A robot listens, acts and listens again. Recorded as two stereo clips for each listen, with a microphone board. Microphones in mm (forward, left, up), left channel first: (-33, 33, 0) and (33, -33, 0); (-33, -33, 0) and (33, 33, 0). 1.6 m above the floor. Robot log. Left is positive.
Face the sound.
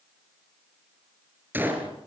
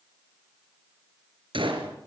note: The gunshot: 25° left.
cmd yaw +25
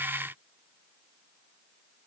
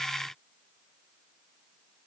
end: I heard a gunshot from this way, but can't make it out now.